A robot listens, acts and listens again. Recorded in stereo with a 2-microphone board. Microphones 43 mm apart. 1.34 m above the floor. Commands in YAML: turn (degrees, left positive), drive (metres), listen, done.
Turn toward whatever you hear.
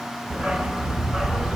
turn: -30
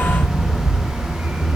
turn: -145
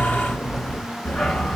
done: "Found it: a dog barking, straight ahead."